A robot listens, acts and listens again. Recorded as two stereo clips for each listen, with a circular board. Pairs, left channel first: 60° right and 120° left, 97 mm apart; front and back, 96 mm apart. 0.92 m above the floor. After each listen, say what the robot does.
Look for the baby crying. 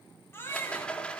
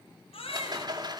Found it: a baby crying, straight ahead, over 4 m away.